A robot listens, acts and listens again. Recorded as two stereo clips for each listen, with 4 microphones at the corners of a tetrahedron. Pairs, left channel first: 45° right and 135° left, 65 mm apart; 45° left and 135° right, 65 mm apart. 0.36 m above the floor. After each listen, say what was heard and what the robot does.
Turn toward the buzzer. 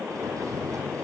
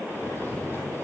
Keep listening.
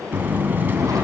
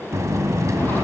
The buzzer: 170° right. Turn 170° right.
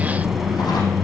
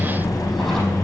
The buzzer is now 50° left. Turn 50° left.
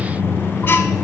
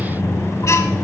Facing the buzzer.